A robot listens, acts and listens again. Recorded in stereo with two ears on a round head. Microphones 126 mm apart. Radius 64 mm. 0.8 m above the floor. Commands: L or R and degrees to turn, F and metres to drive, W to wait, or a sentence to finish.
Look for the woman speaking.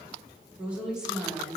L30
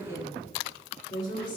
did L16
L145
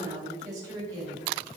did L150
R30
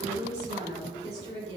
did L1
R30
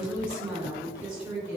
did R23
R10
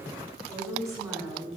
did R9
Facing the woman speaking, 2 to 4 m away.